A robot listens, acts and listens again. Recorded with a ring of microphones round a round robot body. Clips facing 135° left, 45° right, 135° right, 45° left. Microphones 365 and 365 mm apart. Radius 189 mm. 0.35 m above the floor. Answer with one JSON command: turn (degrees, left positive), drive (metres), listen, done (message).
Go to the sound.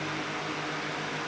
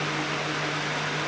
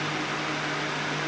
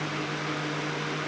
{"listen": true}
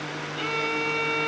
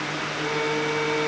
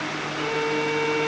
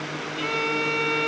{"turn": 85}
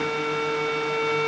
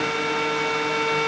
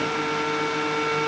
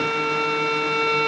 {"turn": 35}
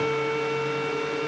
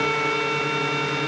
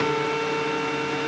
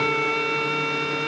{"turn": 15}
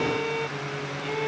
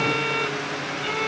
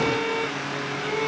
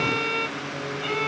{"drive": 1.0}
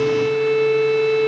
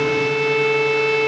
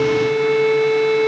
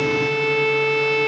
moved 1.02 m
{"turn": 10}
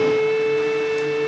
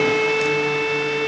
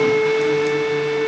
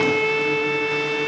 {"drive": 1.0}
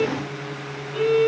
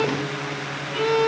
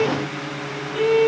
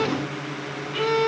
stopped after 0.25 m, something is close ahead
{"done": "I am next to the violin."}